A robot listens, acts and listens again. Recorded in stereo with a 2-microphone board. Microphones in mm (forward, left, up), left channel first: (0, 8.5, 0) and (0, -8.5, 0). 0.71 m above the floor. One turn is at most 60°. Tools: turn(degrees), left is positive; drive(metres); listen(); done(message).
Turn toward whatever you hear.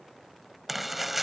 turn(degrees=-30)
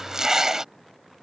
turn(degrees=-60)
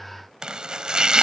turn(degrees=-60)
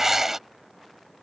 turn(degrees=-30)
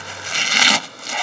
done("Found it: chopping, straight ahead.")